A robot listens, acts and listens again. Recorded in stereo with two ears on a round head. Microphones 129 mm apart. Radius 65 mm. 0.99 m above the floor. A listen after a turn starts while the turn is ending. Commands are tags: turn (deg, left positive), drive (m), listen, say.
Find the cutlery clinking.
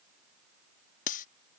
<turn deg="60"/>
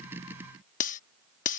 <turn deg="60"/>
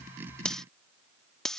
<say>Found it: cutlery clinking, straight ahead.</say>